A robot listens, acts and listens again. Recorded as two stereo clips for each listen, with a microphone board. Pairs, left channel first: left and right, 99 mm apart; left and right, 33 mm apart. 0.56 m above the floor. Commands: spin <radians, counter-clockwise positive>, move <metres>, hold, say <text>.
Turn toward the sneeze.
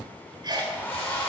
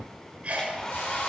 spin -0.79
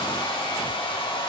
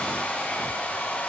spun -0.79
hold
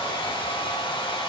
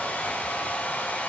say I heard a sneeze, but can't make it out now. It was about straight ahead or 90° right.